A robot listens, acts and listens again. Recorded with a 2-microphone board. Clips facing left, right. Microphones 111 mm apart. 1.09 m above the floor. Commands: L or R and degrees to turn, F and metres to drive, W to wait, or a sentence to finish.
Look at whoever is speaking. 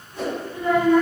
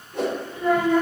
R30
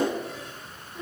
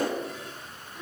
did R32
L20
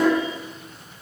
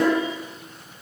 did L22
Found it: a child speaking, straight ahead.